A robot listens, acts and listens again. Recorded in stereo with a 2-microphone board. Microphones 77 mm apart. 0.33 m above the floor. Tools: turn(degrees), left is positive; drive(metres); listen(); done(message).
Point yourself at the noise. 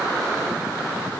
listen()
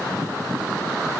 listen()
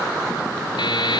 turn(degrees=90)
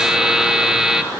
turn(degrees=-10)
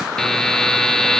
done("Facing the buzzer.")